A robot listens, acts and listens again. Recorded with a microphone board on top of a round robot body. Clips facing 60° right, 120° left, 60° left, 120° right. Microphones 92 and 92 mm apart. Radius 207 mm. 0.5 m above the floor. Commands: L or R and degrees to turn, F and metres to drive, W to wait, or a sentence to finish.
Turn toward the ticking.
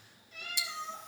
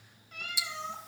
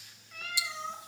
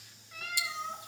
R155
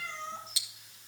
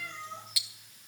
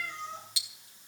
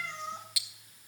Found it: ticking, straight ahead.